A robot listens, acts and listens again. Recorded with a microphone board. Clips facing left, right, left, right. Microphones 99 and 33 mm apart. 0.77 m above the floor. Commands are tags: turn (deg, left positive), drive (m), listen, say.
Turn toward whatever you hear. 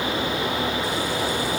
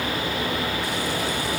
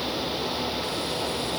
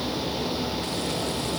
<listen/>
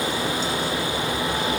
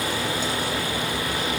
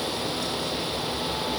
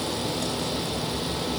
<listen/>
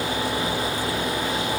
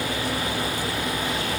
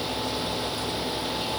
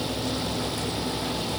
<say>I can't make out anything.</say>